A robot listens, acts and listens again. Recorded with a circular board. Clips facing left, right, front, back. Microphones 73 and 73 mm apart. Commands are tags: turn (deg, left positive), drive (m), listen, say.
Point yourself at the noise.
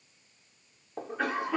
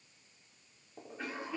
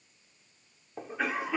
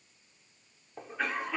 <turn deg="85"/>
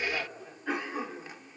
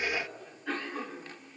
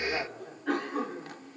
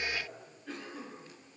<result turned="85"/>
<turn deg="15"/>
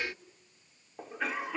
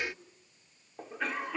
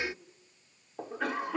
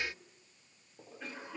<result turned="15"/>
<say>Facing the cough, 2 to 4 m away.</say>